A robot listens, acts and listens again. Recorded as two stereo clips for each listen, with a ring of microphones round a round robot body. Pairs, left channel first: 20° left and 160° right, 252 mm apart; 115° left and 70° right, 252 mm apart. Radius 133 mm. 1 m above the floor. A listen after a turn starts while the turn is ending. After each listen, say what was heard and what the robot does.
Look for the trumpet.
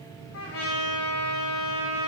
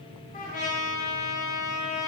The trumpet: 55° left. Turn 55° left.
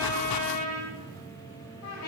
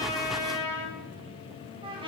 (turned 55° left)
Found it: a trumpet, straight ahead.